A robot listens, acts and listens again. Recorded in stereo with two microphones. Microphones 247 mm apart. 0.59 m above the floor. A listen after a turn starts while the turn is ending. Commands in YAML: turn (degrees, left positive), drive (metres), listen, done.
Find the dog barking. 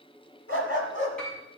turn: 55
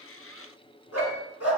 turn: 70
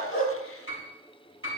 listen: true
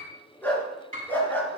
turn: 10
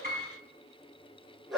done: "Found it: a dog barking, straight ahead, over 4 m away."